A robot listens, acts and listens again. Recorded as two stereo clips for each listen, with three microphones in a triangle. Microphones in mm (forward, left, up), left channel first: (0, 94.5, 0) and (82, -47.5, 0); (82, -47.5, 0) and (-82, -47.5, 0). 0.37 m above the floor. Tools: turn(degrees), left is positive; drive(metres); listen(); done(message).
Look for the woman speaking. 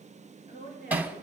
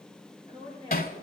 turn(degrees=130)
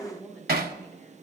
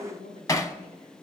turn(degrees=35)
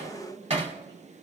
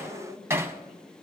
done("Facing the woman speaking.")